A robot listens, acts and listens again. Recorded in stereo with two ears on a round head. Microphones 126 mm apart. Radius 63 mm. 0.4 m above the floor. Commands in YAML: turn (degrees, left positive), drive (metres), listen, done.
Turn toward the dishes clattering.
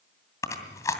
listen: true
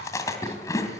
listen: true
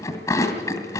done: "I can't make out dishes clattering to turn to."